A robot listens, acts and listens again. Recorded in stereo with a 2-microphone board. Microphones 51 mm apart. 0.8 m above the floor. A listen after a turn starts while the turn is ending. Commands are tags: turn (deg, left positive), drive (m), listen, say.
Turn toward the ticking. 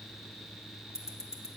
<turn deg="90"/>
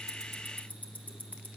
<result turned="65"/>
<turn deg="35"/>
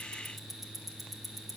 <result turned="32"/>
<say>Found it: ticking, straight ahead, under 1 m away.</say>